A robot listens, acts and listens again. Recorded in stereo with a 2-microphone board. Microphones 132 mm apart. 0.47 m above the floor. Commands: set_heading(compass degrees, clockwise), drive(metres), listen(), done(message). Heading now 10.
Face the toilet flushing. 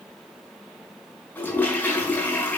set_heading(340)
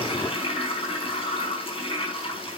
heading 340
set_heading(205)
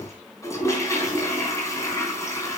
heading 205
set_heading(185)
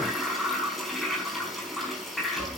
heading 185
done("Found it: a toilet flushing, straight ahead.")